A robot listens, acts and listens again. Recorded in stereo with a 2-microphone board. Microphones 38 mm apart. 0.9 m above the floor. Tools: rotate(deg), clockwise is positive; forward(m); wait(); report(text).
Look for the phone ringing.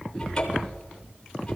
wait()
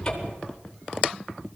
wait()
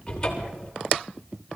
report("I can't make out a phone ringing, only a cupboard door.")